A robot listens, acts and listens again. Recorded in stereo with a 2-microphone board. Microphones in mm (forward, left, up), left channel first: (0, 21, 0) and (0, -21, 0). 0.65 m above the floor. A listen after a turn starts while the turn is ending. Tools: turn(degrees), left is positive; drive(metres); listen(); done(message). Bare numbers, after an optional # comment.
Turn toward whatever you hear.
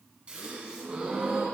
# The gasp: about 25° right or 155° right.
turn(-25)
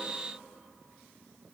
listen()
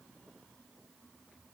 done("I heard a gasp, but can't make it out now. It was about straight ahead or 130° right.")